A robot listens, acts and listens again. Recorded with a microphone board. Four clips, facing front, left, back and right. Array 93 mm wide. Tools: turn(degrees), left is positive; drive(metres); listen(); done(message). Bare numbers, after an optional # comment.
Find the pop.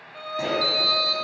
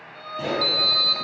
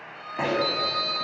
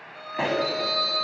# The pop: 120° right.
turn(-120)
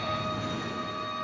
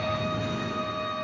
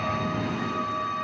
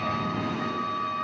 done("Facing where the pop came from. I can't hear it now.")